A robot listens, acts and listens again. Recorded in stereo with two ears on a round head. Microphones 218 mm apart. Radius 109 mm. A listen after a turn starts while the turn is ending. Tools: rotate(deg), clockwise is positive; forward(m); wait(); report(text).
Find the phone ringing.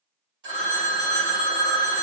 rotate(45)
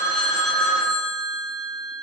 rotate(80)
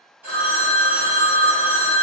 rotate(-25)
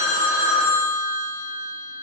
report("Found it: a phone ringing, straight ahead, 1 to 2 m away.")